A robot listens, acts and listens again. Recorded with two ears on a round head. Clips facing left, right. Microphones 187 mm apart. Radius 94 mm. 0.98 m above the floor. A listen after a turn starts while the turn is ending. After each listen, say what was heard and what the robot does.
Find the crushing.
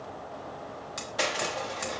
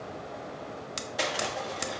Turn 30° right.
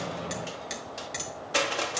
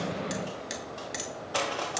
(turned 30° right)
So it is at 25° left. Turn 25° left.
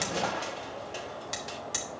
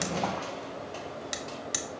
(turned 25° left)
The crushing is now 15° left. Turn 15° left.
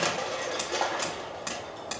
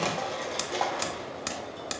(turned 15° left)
Found it: crushing, straight ahead.